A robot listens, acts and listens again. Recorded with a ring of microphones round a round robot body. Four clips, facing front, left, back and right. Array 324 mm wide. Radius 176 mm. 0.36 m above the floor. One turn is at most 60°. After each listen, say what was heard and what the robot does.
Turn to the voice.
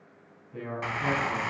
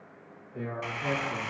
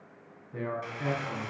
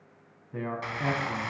The man speaking: 105° right. Turn 60° right.
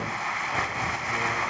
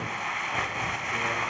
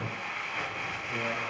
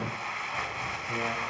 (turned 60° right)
Nothing new. It was at 45° right. Turn 45° right.
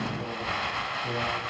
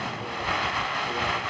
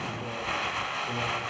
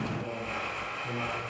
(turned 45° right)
Keep listening.
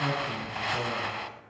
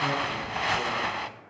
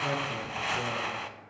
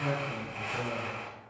Facing where the man speaking came from. I can't hear it now.